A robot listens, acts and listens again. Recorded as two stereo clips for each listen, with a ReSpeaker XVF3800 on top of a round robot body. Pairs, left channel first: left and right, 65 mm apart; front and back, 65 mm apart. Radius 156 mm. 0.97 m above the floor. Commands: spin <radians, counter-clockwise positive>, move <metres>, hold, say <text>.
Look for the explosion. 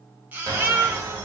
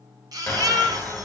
spin -1.40
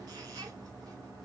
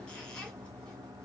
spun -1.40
say Facing where the explosion came from. I can't hear it now.